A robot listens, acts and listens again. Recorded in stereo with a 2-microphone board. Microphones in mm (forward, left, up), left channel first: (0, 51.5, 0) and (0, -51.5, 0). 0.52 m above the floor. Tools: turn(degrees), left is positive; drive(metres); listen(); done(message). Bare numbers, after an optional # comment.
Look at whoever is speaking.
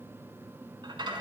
listen()
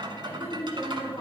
# The woman speaking: about 40° left or 140° left.
turn(40)
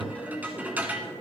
# So it is at 15° left.
turn(15)
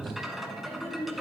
done("Facing the woman speaking.")